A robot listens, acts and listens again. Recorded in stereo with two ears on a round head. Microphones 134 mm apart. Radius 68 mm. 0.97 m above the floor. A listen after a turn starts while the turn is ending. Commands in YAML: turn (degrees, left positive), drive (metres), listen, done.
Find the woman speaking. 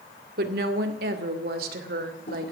turn: -75
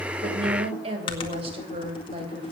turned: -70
turn: -35
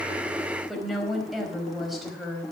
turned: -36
done: "Facing the woman speaking."